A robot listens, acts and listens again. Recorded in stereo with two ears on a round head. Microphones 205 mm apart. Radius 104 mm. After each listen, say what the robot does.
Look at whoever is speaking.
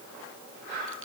Keep listening.
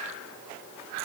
Keep listening.
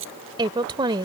Turn 20° right.
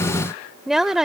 Found it: a woman speaking, straight ahead.